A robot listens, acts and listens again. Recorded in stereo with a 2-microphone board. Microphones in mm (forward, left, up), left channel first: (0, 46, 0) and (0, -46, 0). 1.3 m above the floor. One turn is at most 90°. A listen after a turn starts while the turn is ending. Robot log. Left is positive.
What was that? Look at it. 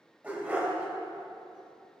note: The dog barking: about 15° right or 165° right.
cmd yaw -15
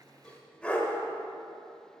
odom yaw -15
note: So it is at 15° left.
cmd yaw +15
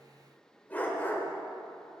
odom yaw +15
note: The dog barking is now 20° left.
cmd yaw +20
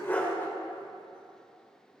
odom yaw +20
note: The dog barking is now 15° left.
cmd yaw +15
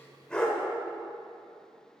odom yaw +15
note: The dog barking is now 10° left.
cmd yaw +10
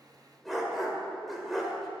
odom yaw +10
end: Facing the dog barking, 1 to 2 m away.